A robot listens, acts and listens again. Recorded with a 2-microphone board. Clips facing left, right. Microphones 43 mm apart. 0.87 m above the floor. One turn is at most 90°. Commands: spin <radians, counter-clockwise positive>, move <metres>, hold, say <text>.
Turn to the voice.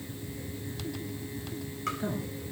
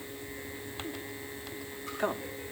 spin -1.57
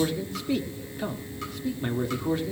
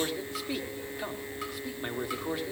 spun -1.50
say Facing the man speaking.